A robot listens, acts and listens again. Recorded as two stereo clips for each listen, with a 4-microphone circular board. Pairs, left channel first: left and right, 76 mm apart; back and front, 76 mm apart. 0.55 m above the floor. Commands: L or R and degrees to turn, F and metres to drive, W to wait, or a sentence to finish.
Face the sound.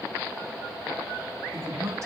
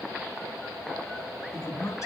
R135
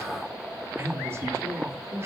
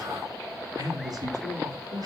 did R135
R30
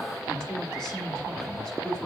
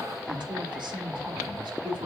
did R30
L10
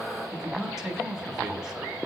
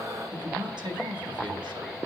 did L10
Found it: a man speaking, straight ahead, over 4 m away.